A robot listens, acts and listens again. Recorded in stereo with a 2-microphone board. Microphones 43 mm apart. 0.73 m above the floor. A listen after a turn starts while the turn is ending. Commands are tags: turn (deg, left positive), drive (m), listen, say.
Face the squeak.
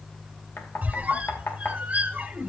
<turn deg="-30"/>
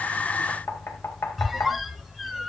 <say>Found it: a squeak, straight ahead.</say>